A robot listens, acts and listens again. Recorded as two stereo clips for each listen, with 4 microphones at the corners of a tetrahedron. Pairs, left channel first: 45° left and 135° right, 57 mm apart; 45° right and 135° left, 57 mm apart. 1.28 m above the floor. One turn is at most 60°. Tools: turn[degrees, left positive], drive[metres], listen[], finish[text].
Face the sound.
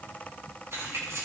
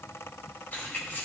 Thought: The keys jangling: 105° right.
Action: turn[-60]
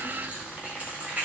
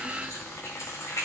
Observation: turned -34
Thought: The keys jangling is now 75° right.
Action: turn[-60]
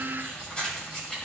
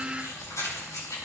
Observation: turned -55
Thought: The keys jangling is now 30° right.
Action: turn[-30]
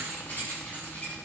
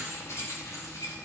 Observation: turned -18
Thought: The keys jangling is now 15° right.
Action: turn[-15]
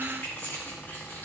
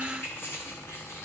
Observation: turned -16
Action: finish[Facing the keys jangling, over 4 m away.]